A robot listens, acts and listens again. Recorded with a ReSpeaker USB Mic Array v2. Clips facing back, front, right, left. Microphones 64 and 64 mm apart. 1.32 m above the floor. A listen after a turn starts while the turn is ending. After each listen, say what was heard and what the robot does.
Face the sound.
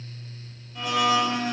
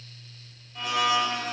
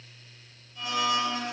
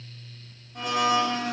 The blender: 90° left. Turn 90° left.
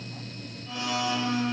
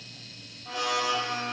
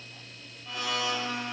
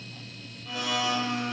Found it: a blender, straight ahead, under 1 m away.